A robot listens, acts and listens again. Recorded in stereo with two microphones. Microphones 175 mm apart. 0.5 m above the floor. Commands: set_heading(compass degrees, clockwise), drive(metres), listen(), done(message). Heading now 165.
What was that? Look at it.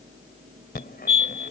set_heading(105)
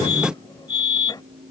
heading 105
set_heading(80)
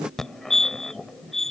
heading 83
done("Found it: a fire alarm, straight ahead.")